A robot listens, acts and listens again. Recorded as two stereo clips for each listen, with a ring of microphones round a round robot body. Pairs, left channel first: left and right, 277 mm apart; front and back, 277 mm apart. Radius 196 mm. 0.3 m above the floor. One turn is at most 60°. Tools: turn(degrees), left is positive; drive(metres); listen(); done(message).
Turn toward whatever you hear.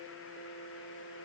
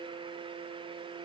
listen()
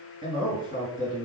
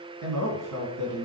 turn(degrees=60)
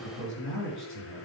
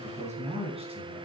turn(degrees=60)
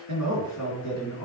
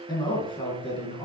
turn(degrees=60)
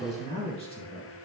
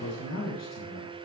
turn(degrees=20)
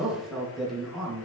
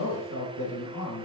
done("Facing the man speaking, 2 to 4 m away.")